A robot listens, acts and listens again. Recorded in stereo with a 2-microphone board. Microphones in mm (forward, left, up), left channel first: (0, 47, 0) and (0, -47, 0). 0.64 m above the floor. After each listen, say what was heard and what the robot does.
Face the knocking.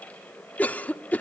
Keep listening.
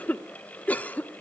Keep listening.
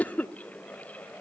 I can't make out knocking, only a cough.